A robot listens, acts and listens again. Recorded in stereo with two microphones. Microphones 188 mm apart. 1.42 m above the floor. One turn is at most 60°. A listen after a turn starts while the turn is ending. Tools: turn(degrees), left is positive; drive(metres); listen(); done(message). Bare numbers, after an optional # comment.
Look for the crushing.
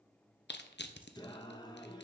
# The crushing: about 60° left or 120° left.
turn(60)
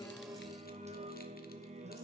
listen()
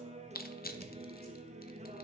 # So it is at 55° left.
turn(55)
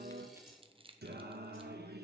# The crushing is now 30° right.
turn(-30)
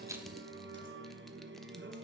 listen()
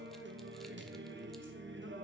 listen()
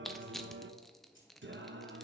done("Found it: crushing, straight ahead.")